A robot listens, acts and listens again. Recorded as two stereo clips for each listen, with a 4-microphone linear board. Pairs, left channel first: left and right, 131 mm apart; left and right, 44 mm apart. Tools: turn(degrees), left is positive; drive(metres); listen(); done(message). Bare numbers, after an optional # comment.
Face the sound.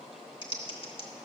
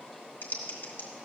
# The typing on a keyboard: about 45° left or 135° left.
turn(45)
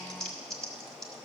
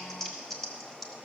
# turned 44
done("Facing the typing on a keyboard.")